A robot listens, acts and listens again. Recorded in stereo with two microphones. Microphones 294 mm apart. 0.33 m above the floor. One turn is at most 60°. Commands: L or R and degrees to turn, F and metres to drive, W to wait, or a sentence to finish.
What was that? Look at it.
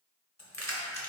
L60
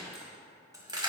R15
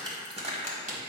R30
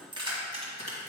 R25
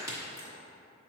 R15
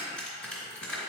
Facing the keys jangling.